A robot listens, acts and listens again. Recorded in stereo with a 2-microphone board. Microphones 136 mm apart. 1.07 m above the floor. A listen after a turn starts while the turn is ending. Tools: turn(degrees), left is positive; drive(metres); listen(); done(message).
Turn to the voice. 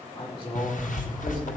turn(degrees=40)
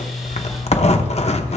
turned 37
listen()
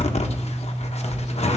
listen()
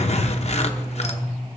done("I heard a woman speaking, but can't make it out now. It was about 5° left or 100° left.")